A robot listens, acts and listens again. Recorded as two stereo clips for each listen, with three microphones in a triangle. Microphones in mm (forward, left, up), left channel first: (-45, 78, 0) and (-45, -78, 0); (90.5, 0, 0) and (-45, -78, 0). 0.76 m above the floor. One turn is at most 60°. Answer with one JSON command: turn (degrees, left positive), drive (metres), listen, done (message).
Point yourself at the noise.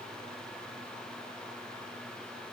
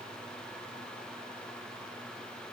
{"listen": true}
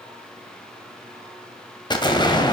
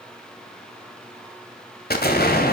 {"turn": 30}
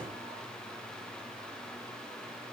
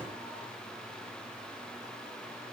{"done": "I heard an explosion from this way, but can't make it out now."}